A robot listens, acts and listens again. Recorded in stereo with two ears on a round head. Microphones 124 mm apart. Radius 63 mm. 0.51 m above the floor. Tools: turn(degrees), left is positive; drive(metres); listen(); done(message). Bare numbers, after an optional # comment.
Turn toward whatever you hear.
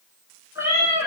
# The cat meowing: about 20° right or 160° right.
turn(-20)
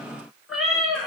done("Found it: a cat meowing, straight ahead, under 1 m away.")